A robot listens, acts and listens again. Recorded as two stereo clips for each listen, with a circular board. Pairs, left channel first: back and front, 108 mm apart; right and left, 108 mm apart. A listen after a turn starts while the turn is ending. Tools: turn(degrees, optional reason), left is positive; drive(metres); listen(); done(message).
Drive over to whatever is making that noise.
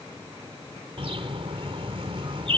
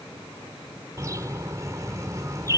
turn(degrees=30, reason="The bird: 30° left.")
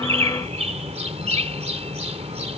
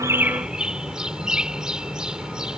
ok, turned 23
turn(degrees=10, reason="The bird is now 10° left.")
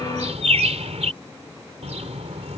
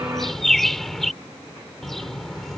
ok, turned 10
drive(metres=1.0)
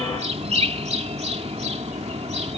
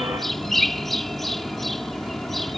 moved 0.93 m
drive(metres=1.0)
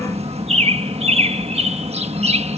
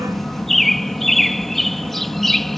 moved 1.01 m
drive(metres=1.0)
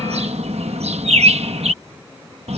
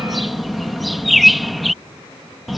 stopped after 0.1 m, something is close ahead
done("Arrived at the bird, straight ahead.")